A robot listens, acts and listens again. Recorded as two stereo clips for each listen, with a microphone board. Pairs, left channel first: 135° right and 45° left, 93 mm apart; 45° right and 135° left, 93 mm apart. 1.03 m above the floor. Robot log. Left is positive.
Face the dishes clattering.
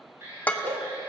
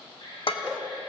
note: The dishes clattering: 60° right.
cmd yaw -60
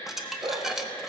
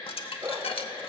note: The dishes clattering is now 40° right.
cmd yaw -40
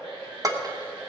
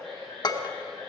end: Facing the dishes clattering.